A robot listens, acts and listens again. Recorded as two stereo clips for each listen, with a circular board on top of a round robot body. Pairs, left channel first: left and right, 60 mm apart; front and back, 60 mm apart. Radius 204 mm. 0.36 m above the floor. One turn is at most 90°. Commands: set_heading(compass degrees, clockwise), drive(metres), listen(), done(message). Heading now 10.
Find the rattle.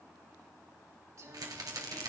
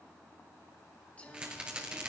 set_heading(100)
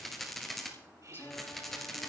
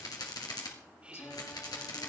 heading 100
done("Found it: a rattle, straight ahead.")